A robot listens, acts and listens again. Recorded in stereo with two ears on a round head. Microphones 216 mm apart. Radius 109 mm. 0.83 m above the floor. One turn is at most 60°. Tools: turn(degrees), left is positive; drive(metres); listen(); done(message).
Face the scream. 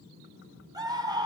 turn(degrees=-15)
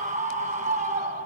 turn(degrees=-60)
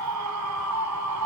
turn(degrees=-60)
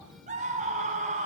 turn(degrees=-30)
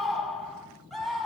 done("Found it: a scream, straight ahead.")